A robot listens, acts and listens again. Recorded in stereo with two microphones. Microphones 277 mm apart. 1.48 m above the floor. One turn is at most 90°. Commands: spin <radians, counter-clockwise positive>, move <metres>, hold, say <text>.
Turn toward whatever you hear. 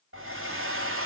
spin -0.79
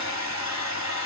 spin -1.57
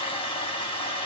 spin 0.35
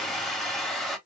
say Facing the hair dryer, 1 to 2 m away.